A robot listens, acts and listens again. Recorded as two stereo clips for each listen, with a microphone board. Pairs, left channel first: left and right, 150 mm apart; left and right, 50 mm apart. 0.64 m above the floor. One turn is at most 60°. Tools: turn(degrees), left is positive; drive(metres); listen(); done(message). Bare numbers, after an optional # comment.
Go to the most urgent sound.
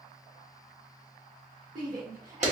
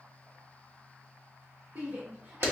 # The shout: about 65° right or 115° right.
turn(-60)
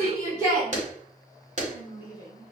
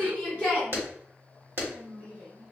# So it is at 25° right.
turn(-25)
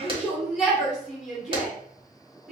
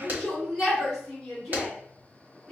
drive(1.0)
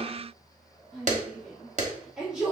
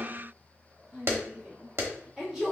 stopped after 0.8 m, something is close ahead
done("Arrived at the shout, straight ahead.")